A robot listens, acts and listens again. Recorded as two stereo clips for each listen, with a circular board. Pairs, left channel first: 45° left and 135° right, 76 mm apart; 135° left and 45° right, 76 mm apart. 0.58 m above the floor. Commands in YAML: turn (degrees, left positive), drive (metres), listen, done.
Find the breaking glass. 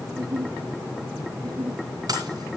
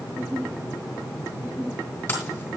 turn: -165
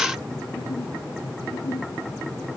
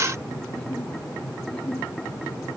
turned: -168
done: "I heard breaking glass from this way, but can't make it out now."